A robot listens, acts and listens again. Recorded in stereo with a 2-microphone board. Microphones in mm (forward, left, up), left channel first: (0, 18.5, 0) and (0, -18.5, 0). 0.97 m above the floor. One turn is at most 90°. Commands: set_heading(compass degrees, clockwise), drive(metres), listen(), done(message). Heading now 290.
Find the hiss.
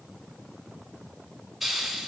set_heading(320)
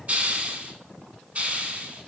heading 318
set_heading(48)
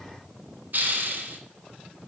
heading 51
set_heading(101)
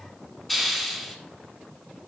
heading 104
done("Facing the hiss.")